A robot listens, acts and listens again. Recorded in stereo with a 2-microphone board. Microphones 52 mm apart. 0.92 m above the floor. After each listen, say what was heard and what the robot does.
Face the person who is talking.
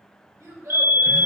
The child speaking: about 70° right or 110° right. Turn 70° right.
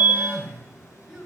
Keep listening.
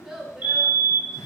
So it is at 10° right. Turn 10° right.
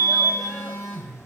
Keep listening.
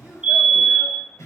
Keep listening.
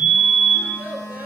The child speaking is now 30° right. Turn 30° right.
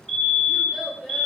Facing the child speaking.